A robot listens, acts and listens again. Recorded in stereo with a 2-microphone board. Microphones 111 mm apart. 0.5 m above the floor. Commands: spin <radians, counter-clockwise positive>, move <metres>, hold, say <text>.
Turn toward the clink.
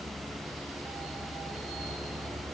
hold
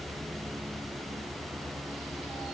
hold
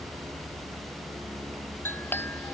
spin 0.35
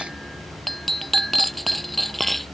say Facing the clink.